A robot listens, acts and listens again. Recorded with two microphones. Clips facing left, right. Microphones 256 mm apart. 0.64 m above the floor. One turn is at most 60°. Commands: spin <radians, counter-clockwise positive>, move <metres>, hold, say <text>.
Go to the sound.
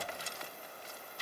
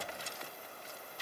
hold
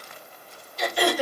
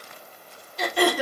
spin -1.05
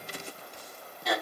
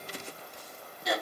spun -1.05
spin -0.44
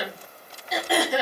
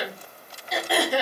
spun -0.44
move 1.0
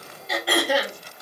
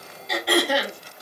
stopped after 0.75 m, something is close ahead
say Arrived at the throat clearing, straight ahead.